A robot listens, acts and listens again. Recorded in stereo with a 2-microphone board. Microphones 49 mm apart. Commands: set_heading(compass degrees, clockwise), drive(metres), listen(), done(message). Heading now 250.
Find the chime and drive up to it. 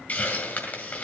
listen()
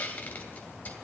listen()
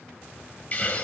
done("I can't make out a chime to turn to.")